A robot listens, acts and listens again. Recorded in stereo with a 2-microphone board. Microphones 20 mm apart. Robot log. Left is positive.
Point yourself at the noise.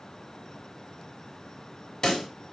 note: The pop: about 30° left or 150° left.
cmd yaw +30
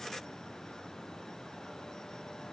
cmd idle
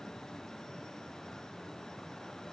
end: I heard a pop, but can't make it out now. It was about straight ahead or 120° left.